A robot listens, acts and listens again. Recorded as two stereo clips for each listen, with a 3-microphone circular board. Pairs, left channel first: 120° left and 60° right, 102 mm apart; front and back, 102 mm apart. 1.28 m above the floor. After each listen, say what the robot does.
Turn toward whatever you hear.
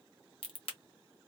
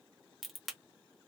Turn 90° left.
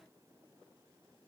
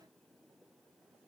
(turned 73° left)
Turn 20° left.
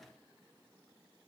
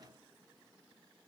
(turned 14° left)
I heard a crack from this way, but can't make it out now.